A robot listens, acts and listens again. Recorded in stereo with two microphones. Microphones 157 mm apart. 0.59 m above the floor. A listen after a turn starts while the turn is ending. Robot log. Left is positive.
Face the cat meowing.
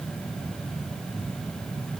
cmd idle
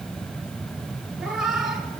cmd yaw +30
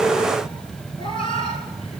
note: So it is at 145° left.
cmd yaw +145
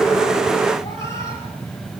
note: The cat meowing is now 20° left.
cmd yaw +20
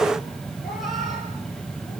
cmd idle
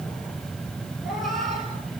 end: Facing the cat meowing.